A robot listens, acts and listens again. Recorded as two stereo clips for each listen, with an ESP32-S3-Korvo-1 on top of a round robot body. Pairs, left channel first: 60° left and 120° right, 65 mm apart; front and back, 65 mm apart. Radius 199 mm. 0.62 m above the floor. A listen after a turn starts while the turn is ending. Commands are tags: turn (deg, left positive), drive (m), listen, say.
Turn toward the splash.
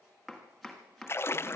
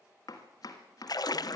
<turn deg="10"/>
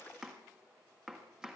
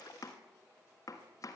<say>I heard a splash from this way, but can't make it out now.</say>